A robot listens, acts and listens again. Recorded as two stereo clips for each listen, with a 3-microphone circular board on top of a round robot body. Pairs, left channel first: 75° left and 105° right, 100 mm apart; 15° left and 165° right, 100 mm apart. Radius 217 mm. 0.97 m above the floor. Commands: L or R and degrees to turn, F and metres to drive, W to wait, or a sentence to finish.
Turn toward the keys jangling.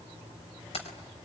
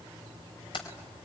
L55
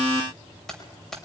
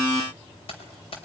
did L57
R10
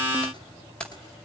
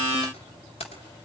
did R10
Facing the keys jangling.